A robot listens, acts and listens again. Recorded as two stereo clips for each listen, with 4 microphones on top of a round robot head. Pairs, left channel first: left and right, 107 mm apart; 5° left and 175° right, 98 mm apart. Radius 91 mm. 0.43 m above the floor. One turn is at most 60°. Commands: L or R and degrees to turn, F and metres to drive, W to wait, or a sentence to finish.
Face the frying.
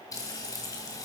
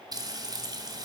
L60
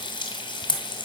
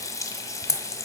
L55
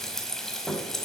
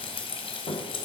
Facing the frying, 1 to 2 m away.